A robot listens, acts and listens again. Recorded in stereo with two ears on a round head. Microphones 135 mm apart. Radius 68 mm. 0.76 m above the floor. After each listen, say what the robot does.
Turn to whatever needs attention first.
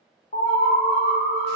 Turn 60° left.
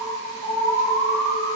Facing the alarm.